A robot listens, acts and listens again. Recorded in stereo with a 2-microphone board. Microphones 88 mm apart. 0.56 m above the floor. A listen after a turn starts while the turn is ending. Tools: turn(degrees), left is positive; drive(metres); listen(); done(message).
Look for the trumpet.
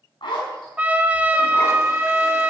turn(degrees=-20)
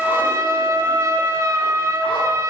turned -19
turn(degrees=-145)
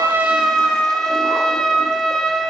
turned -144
done("Found it: a trumpet, straight ahead.")